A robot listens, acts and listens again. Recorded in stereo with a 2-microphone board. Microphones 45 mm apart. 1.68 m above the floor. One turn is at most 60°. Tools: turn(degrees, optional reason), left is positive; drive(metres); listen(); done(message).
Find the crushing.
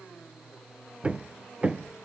listen()
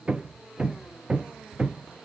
listen()
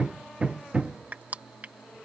turn(degrees=-35, reason="The crushing: about 35° right or 145° right.")
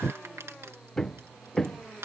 turn(degrees=-60, reason="So it is at 110° right.")
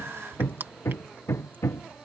turn(degrees=-45, reason="The crushing is now 45° right.")
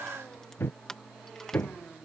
turn(degrees=10, reason="The crushing is now 10° left.")
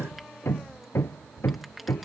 listen()
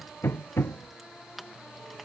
done("Found it: crushing, straight ahead.")